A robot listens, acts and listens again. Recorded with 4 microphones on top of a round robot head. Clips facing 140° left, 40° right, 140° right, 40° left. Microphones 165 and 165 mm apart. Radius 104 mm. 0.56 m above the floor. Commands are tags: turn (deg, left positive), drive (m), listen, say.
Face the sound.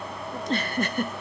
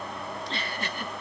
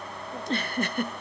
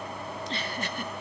<turn deg="180"/>
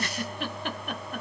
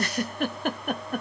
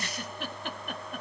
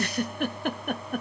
<say>Found it: a giggle, straight ahead.</say>